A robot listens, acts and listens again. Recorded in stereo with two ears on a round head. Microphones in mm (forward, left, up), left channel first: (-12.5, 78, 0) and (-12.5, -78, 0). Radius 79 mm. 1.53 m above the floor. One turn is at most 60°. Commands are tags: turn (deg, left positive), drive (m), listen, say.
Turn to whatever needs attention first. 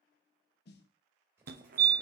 <turn deg="-60"/>
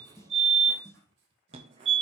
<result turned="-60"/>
<turn deg="-40"/>
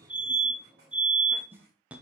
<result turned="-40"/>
<turn deg="-10"/>
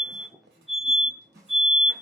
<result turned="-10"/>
<say>Facing the fire alarm, under 1 m away.</say>